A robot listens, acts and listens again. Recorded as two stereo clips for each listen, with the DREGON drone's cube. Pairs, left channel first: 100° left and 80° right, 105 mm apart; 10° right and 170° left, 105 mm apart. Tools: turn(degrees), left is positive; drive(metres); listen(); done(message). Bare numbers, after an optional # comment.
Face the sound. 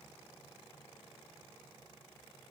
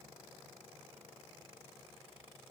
listen()
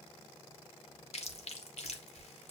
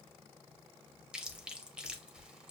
# The chewing: 90° left.
turn(90)
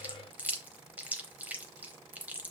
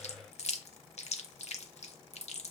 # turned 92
done("Found it: chewing, straight ahead.")